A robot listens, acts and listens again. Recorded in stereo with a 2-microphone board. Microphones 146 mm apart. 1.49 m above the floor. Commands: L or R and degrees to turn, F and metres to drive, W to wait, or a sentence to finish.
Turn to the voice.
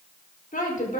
L70
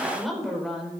Found it: a woman speaking, straight ahead.